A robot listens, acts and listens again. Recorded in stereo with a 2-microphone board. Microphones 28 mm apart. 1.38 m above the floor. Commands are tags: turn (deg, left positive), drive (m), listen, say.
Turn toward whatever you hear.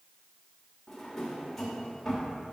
<turn deg="30"/>
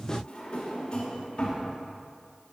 <turn deg="140"/>
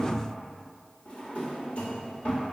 <turn deg="50"/>
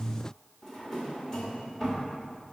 <turn deg="20"/>
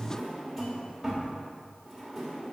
<say>Found it: a drawer, straight ahead.</say>